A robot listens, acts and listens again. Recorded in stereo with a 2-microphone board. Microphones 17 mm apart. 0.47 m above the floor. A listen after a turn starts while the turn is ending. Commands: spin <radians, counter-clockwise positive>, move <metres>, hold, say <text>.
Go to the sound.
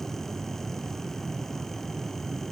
hold
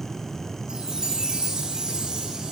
spin -0.96
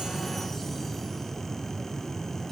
hold
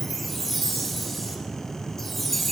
move 1.0
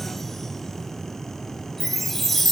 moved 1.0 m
move 1.0
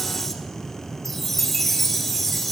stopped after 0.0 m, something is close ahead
say Arrived at the chime, straight ahead.